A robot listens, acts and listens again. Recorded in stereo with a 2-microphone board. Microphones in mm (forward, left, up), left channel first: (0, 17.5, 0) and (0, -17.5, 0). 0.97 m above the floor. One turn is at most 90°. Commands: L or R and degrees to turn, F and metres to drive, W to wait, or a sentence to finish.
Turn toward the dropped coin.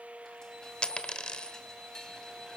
L30
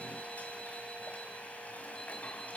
W
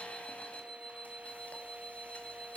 I heard a dropped coin, but can't make it out now. It was about straight ahead or 120° left.